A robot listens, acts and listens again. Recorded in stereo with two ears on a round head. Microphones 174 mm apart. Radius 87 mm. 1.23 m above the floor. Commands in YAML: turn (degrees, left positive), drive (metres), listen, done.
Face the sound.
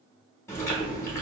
turn: 30
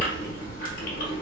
turn: 135
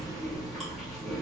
done: "Found it: chewing, straight ahead, 1 to 2 m away."